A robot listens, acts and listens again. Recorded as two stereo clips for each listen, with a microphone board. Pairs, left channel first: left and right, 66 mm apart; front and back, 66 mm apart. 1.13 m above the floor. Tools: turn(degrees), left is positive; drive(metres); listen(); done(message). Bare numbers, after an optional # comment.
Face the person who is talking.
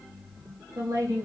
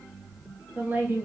# The woman speaking: 120° right.
turn(-120)
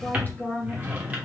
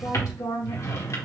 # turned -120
# The woman speaking is now 30° left.
turn(30)
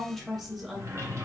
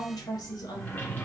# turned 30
done("Found it: a woman speaking, straight ahead.")